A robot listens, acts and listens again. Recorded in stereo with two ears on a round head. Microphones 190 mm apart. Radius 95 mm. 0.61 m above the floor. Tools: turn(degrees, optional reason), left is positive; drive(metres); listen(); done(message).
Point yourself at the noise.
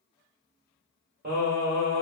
turn(degrees=-40, reason="The singing: about 40° right or 140° right.")
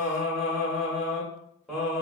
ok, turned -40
done("Facing the singing, 1 to 2 m away.")